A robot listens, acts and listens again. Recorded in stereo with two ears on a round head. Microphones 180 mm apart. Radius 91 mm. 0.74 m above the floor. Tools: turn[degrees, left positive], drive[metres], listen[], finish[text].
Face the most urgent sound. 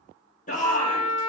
Thought: The shout: about 40° left or 140° left.
Action: turn[40]
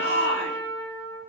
Thought: So it is at 90° left.
Action: turn[90]
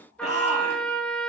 Thought: The shout is now 40° left.
Action: turn[40]
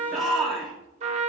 Action: finish[Found it: a shout, straight ahead.]